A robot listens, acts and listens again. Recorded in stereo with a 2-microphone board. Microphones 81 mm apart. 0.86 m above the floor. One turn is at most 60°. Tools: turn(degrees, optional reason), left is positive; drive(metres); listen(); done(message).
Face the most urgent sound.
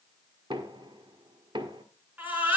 turn(degrees=-20, reason="The baby crying: about 20° right or 160° right.")
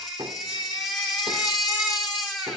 done("Found it: a baby crying, straight ahead.")